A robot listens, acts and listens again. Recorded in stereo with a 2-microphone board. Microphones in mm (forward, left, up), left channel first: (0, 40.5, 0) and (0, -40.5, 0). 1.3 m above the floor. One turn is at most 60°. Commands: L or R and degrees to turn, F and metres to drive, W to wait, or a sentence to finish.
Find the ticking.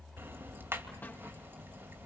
R30
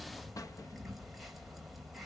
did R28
Found it: ticking, straight ahead, 2 to 4 m away.